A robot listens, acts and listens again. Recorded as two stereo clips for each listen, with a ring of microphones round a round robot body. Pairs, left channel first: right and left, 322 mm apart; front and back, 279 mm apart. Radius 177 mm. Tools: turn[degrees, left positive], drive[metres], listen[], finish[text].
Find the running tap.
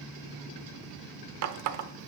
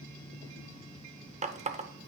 Thought: The running tap: 115° left.
Action: turn[115]
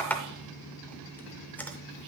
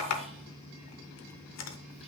Action: finish[Found it: a running tap, straight ahead, under 1 m away.]